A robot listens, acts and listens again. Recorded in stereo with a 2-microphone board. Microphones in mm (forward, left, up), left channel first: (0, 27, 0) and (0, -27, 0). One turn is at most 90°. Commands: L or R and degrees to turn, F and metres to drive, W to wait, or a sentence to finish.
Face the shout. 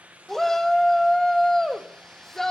L30
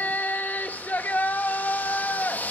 L90
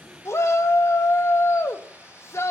L60
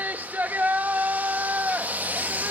R35
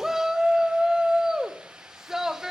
R10
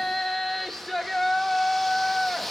Found it: a shout, straight ahead, 1 to 2 m away.